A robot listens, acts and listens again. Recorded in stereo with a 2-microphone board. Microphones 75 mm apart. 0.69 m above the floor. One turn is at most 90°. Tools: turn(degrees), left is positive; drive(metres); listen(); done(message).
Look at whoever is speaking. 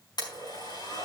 listen()
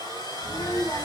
turn(degrees=40)
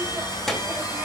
done("Found it: a child speaking, straight ahead.")